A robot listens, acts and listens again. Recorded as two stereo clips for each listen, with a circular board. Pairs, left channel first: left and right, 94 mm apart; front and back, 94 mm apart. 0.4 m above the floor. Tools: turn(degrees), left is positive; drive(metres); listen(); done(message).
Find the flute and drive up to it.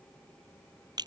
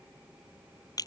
listen()
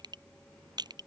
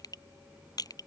listen()
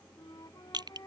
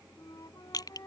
turn(degrees=45)
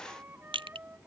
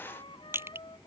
turn(degrees=-20)
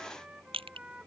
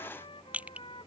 turn(degrees=-10)
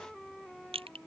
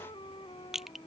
drive(metres=1.0)
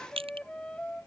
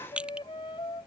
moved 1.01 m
turn(degrees=10)
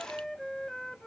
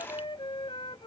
drive(metres=1.0)
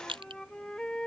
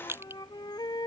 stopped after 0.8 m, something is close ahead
turn(degrees=10)
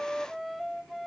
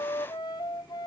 done("I am next to the flute.")